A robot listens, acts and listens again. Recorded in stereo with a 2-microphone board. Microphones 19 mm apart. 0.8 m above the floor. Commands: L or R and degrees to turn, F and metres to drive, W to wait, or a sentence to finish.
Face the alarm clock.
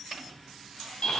W
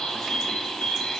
W
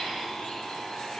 I can't make out an alarm clock to turn to.